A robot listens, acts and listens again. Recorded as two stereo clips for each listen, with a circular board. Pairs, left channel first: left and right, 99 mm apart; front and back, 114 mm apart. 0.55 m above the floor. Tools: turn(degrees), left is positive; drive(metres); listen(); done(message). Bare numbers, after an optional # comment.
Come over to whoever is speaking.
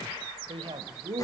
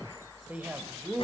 # The man speaking: 105° right.
turn(-105)
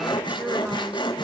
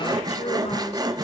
listen()
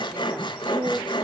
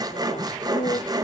# The man speaking is now 15° right.
turn(-15)
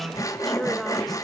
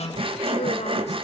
drive(1.0)
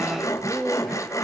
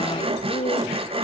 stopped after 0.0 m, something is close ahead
done("Something is in my way. I am facing the man speaking but have not reached it.")